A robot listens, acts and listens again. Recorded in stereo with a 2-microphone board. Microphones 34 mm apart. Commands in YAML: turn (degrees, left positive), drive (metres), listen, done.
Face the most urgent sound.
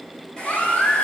turn: 45
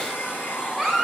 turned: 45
done: "Facing the baby crying."